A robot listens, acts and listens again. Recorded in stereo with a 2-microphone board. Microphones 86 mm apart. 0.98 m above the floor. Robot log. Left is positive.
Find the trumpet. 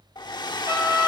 note: The trumpet: about 30° right or 150° right.
cmd yaw -30
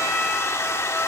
cmd idle
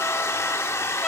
cmd idle
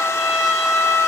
end: Facing the trumpet, over 4 m away.